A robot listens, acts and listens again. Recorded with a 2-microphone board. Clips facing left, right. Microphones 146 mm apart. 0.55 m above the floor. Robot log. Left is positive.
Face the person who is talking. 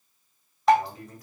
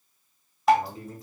note: The man speaking: about 25° right or 155° right.
cmd yaw -25
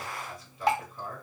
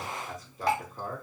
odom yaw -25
note: So it is at 125° right.
cmd yaw -125
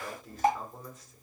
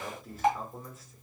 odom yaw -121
end: Facing the man speaking.